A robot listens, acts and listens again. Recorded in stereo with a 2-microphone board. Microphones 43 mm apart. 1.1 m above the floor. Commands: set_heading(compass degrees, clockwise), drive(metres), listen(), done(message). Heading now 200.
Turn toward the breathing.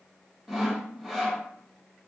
listen()
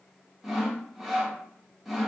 listen()
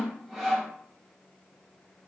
done("I can't make out breathing to turn to.")